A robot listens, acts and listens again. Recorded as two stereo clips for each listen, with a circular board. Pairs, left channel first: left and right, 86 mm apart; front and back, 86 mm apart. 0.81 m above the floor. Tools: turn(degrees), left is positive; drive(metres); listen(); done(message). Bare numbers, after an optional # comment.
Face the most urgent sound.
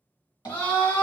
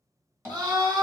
# The scream: 155° left.
turn(155)
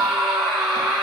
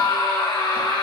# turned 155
done("Facing the scream, 1 to 2 m away.")